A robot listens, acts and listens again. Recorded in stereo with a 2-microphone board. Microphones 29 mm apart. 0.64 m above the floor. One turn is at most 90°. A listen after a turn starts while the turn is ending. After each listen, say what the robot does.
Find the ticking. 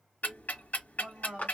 Turn 90° left.
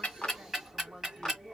Turn 10° right.
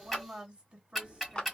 Found it: ticking, straight ahead.